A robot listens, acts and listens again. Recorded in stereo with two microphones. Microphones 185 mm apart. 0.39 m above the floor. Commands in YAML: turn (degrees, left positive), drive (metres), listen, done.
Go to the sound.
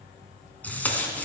turn: 30
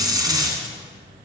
turn: -20
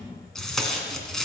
drive: 1.0
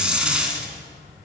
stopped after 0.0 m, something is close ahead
done: "Blocked. The tape being pulled is further on, straight ahead."